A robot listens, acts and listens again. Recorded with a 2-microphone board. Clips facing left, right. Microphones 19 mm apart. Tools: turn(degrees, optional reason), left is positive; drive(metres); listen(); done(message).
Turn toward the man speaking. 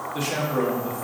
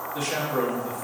turn(degrees=25, reason="The man speaking: about 25° left or 155° left.")
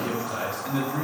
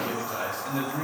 turn(degrees=125, reason="So it is at 125° left.")
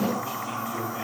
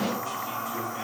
listen()
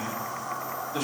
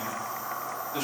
turn(degrees=-25, reason="The man speaking is now 25° right.")
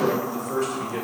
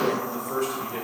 done("Facing the man speaking, over 4 m away.")